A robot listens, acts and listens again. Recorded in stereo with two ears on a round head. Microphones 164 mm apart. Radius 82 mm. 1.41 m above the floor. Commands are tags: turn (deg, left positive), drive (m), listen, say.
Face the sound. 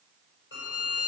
<turn deg="65"/>
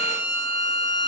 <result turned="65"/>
<say>Found it: a violin, straight ahead, over 4 m away.</say>